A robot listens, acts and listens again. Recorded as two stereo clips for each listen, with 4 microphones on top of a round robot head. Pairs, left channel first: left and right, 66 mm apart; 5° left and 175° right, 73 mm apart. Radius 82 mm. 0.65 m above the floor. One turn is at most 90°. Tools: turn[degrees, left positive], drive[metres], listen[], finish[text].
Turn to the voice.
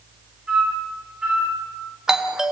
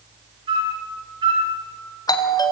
Action: listen[]
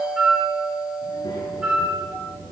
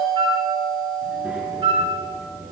Thought: The child speaking: 115° left.
Action: turn[90]
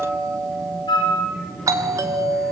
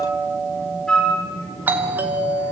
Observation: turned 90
Thought: The child speaking is now 10° left.
Action: turn[10]
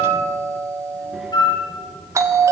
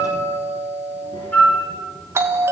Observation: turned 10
Action: finish[Found it: a child speaking, straight ahead.]